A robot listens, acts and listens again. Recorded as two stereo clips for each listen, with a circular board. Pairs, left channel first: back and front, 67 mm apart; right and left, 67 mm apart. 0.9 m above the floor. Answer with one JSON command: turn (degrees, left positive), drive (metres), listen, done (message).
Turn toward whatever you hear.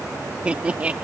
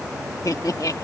{"turn": -65}
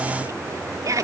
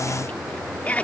{"turn": -20}
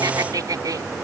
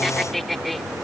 {"done": "Facing the laughter."}